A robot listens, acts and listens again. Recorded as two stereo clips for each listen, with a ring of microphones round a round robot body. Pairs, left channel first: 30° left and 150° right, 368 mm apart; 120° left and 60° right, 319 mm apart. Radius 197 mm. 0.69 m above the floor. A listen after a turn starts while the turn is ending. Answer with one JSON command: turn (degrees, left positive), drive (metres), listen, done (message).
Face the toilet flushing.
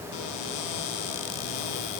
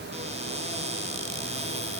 {"listen": true}
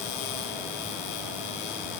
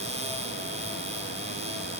{"listen": true}
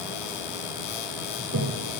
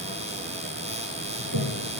{"turn": -100}
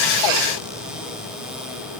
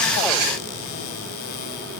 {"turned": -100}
{"listen": true}
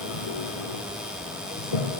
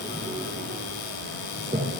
{"turn": 10}
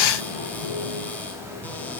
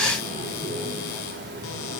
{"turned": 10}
{"done": "Facing the toilet flushing."}